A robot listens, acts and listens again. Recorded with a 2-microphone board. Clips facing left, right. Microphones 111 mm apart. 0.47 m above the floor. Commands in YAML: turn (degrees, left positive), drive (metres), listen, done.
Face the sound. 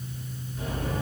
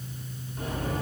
turn: -45
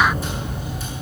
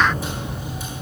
done: "Found it: a sliding door, straight ahead, over 4 m away."